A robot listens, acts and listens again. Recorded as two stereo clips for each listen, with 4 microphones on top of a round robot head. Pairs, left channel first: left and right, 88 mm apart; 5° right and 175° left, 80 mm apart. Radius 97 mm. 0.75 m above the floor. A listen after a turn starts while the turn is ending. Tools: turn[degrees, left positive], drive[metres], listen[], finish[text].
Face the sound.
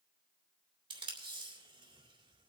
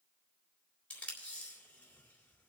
Thought: The tape being pulled: 80° right.
Action: turn[-80]
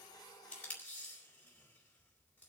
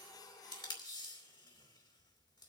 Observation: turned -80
Thought: The tape being pulled is now 15° left.
Action: turn[15]
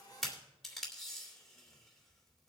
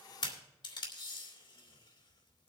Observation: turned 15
Action: finish[Found it: tape being pulled, straight ahead.]